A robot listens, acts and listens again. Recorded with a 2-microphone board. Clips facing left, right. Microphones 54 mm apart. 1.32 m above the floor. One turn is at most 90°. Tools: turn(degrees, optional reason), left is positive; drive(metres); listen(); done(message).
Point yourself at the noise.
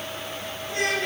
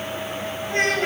turn(degrees=-40, reason="The child speaking: about 40° right or 140° right.")
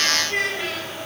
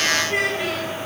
done("Facing the child speaking.")